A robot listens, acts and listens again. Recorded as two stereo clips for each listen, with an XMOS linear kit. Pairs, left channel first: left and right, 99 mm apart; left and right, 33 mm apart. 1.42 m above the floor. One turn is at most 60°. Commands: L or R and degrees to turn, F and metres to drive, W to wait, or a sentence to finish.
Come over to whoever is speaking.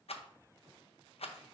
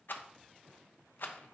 W
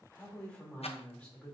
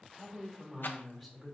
L30
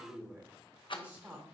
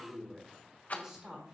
R20
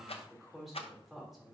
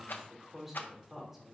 F1.0
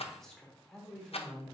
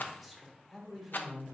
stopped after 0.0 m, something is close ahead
Something is in my way. I am facing the woman speaking but have not reached it.